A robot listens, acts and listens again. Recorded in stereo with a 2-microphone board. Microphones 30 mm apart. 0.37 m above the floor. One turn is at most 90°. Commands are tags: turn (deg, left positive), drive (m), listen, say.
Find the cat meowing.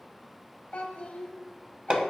<listen/>
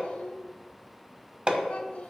<listen/>
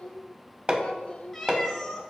<turn deg="30"/>
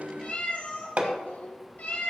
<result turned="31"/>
<turn deg="90"/>
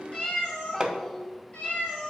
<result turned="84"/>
<turn deg="40"/>
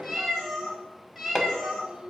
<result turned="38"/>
<say>Found it: a cat meowing, straight ahead, 2 to 4 m away.</say>